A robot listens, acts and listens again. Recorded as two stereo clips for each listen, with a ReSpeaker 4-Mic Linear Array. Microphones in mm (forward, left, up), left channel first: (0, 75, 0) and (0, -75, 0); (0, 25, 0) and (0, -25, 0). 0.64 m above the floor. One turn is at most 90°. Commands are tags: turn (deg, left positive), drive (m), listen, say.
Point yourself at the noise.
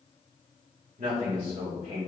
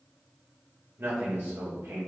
<turn deg="-65"/>
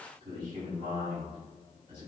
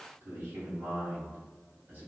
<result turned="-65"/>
<turn deg="-35"/>
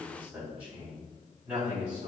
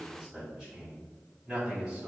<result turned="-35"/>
<turn deg="-10"/>
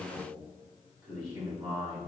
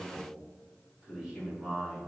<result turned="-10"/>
<say>Facing the man speaking, over 4 m away.</say>